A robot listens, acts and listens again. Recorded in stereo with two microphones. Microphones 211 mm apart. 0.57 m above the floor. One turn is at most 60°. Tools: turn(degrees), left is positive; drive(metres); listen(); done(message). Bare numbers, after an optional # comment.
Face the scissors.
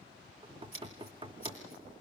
# The scissors: about 75° right or 105° right.
turn(-60)
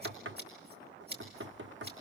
# So it is at 50° right.
turn(-50)
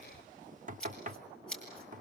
done("Facing the scissors, over 4 m away.")